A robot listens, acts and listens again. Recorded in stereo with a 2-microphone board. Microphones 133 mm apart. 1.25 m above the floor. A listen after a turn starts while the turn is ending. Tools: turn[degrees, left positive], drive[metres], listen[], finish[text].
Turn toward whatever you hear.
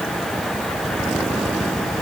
Action: listen[]
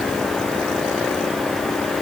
Action: listen[]
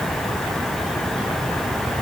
Action: finish[I can't make out anything to turn to.]